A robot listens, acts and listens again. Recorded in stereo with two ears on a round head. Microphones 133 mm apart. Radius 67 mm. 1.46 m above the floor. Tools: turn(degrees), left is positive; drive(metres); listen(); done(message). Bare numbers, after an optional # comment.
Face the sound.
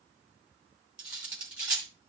turn(-30)
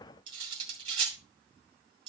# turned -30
# So it is at 140° right.
turn(-140)
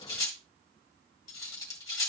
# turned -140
# The cutlery clinking is now 25° left.
turn(25)
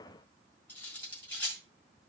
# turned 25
# The cutlery clinking is now 10° left.
turn(10)
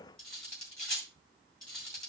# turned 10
done("Facing the cutlery clinking.")